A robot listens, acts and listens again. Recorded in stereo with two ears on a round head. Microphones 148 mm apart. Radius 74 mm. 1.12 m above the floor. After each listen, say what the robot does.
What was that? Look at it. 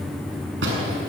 Turn 90° right.
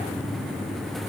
I heard a door slam from this way, but can't make it out now.